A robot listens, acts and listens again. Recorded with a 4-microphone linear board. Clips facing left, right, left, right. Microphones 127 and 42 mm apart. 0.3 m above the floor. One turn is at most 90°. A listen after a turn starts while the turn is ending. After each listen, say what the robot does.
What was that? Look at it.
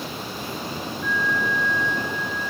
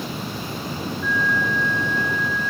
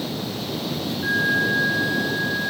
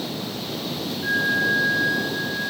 Turn 15° left.
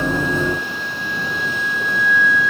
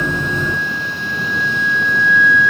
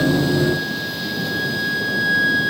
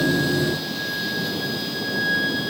Found it: a flute, straight ahead.